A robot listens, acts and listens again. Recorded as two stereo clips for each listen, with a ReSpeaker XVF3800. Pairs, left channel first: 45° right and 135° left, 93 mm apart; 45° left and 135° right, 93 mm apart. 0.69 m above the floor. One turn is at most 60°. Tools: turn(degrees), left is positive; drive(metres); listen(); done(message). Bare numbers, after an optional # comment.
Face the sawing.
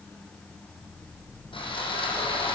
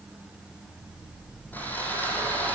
# The sawing: 25° right.
turn(-25)
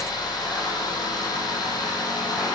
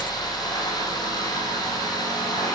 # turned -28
done("Found it: sawing, straight ahead.")